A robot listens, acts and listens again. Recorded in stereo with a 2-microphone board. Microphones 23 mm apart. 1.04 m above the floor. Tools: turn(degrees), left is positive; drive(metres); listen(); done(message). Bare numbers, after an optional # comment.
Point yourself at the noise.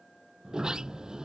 # The sliding door: about 35° right or 145° right.
turn(-35)
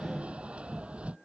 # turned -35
# So it is at 110° right.
turn(-110)
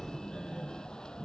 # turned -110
# The sliding door is now 35° left.
turn(35)
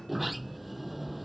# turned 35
done("Found it: a sliding door, straight ahead.")